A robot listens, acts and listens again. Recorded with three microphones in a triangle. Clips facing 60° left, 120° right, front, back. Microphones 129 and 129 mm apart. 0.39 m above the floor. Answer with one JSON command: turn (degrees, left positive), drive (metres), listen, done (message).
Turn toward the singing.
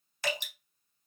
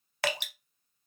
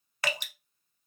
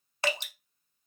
{"listen": true}
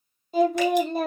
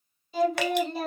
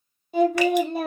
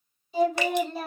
{"turn": 25}
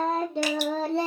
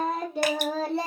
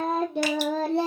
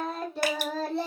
{"done": "Facing the singing, 2 to 4 m away."}